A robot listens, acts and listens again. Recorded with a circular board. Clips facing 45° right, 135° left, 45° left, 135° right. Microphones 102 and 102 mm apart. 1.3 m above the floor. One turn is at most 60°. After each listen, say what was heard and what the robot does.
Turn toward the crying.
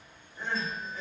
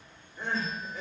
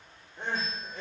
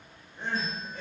The crying: 45° left. Turn 45° left.
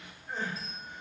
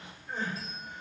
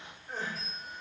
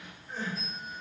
The crying is now 10° left. Turn 10° left.
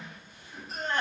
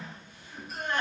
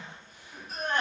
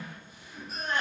Found it: crying, straight ahead.